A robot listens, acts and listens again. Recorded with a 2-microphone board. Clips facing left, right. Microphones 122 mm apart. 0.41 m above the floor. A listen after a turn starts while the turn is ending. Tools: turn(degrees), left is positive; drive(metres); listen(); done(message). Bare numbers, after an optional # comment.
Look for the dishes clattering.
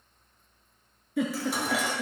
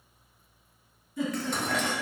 turn(30)
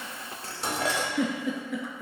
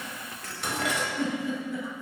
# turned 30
# So it is at 145° left.
turn(145)
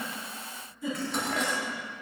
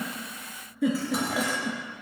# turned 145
done("Facing the dishes clattering.")